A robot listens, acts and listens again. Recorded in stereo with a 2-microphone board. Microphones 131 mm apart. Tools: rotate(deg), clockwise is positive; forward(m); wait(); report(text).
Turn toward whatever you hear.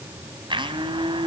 rotate(40)
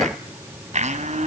rotate(95)
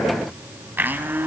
rotate(15)
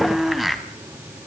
report("Found it: a blender, straight ahead, 1 to 2 m away.")